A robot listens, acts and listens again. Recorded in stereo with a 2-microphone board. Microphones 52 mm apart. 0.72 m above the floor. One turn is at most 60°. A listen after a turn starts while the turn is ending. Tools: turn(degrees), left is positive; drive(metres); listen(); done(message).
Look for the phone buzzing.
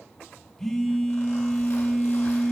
turn(degrees=30)
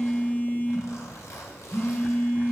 turn(degrees=60)
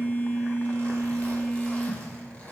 turn(degrees=60)
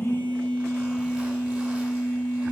turn(degrees=25)
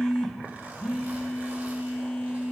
turn(degrees=15)
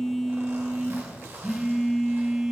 done("Facing the phone buzzing, 1 to 2 m away.")